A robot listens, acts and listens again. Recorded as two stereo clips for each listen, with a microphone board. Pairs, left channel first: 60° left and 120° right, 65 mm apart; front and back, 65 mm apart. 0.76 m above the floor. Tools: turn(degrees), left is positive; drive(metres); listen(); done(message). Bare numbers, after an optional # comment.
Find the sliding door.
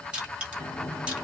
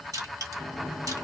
# The sliding door: 90° left.
turn(90)
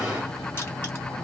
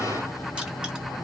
# The sliding door is now 30° left.
turn(30)
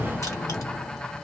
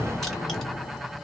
done("Facing the sliding door, 1 to 2 m away.")